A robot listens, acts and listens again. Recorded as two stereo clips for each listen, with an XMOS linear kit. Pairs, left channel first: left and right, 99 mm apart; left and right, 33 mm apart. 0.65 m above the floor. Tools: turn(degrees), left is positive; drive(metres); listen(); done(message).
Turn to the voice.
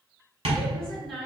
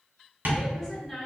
turn(degrees=30)
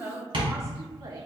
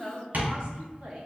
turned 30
turn(degrees=-35)
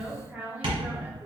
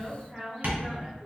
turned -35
turn(degrees=-15)
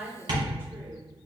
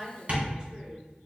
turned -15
turn(degrees=-15)
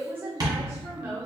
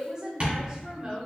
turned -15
turn(degrees=-30)
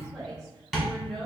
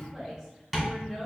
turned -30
done("Facing the woman speaking, 1 to 2 m away.")